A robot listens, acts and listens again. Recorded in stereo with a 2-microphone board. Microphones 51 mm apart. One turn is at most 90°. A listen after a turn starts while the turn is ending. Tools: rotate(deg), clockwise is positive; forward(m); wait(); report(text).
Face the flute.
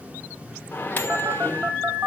rotate(35)
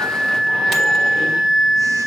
report("Facing the flute.")